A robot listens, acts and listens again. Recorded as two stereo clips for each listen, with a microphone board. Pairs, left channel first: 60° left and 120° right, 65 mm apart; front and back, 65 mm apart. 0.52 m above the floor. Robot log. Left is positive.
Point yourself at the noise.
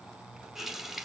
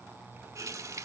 note: The running tap: 155° left.
cmd yaw +155
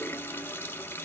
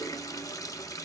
note: The running tap is now 10° left.
cmd yaw +10
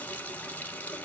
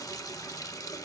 end: Facing the running tap.